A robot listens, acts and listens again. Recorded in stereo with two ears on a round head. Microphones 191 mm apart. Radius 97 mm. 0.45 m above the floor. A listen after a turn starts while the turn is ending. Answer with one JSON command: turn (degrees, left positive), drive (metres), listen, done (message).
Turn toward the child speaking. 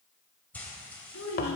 {"turn": 70}
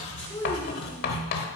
{"listen": true}
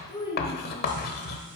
{"turn": 20}
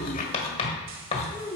{"turn": 20}
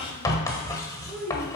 {"turn": 10}
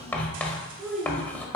{"done": "Facing the child speaking."}